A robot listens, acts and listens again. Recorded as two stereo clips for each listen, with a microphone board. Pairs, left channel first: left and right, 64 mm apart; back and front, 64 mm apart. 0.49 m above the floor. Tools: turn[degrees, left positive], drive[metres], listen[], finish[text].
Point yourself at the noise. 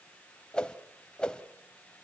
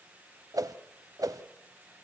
Thought: The whoosh: 15° left.
Action: turn[15]
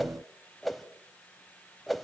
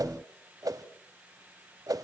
Action: finish[Facing the whoosh, 1 to 2 m away.]